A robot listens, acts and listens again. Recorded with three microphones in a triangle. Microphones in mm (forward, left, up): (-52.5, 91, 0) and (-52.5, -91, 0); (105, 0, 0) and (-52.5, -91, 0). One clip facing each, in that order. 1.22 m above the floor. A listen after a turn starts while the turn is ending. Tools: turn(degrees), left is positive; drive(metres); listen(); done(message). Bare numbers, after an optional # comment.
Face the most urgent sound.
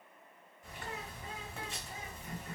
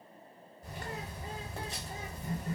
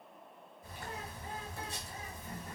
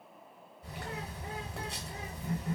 listen()
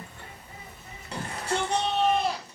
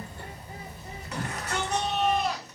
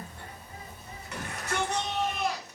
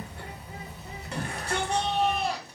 # The shout: 155° left.
turn(155)
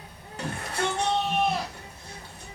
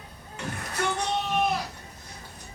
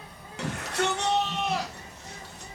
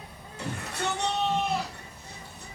# The shout is now 30° left.
turn(30)
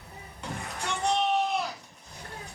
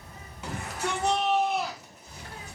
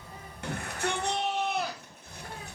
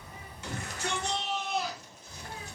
done("Facing the shout, under 1 m away.")